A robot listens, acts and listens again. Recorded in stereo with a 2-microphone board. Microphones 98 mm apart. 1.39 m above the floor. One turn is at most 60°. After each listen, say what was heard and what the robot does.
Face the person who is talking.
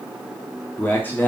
The man speaking: about 20° left or 160° left. Turn 20° left.
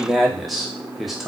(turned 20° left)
Facing the man speaking.